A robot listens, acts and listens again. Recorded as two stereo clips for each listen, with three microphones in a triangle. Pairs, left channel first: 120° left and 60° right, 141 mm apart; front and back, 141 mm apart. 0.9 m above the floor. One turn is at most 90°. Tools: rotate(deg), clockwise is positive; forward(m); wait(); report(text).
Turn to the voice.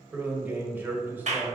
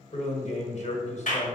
rotate(-15)
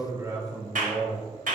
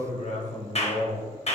report("Found it: a man speaking, straight ahead, 1 to 2 m away.")